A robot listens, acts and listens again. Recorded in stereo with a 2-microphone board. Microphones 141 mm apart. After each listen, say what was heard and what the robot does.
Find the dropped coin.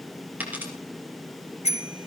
Turn 30° right.
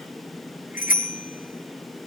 Keep listening.
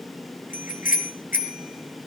I heard a dropped coin, but can't make it out now. It was about 20° left or 140° right.